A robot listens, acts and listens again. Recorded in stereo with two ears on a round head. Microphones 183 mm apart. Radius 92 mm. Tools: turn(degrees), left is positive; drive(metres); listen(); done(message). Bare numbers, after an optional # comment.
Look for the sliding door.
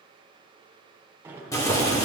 turn(-30)
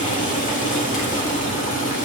listen()
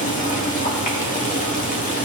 listen()
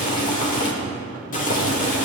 done("I heard a sliding door, but can't make it out now. It was about 20° left or 140° right.")